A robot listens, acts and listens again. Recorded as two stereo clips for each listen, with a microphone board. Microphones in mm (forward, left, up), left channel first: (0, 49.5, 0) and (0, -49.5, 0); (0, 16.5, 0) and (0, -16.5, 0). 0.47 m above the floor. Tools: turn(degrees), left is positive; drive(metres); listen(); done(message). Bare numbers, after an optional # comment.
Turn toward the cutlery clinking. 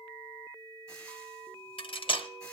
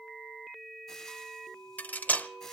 # The cutlery clinking: about 60° left or 120° left.
turn(60)
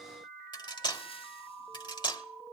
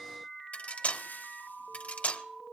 # So it is at 55° left.
turn(55)
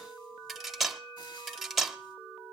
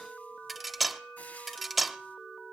done("Found it: cutlery clinking, straight ahead.")